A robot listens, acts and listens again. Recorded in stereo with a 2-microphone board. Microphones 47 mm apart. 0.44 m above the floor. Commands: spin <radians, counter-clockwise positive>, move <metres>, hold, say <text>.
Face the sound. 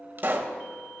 spin -0.79
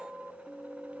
hold
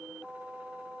say I heard a pop, but can't make it out now. It was about straight ahead or 90° right.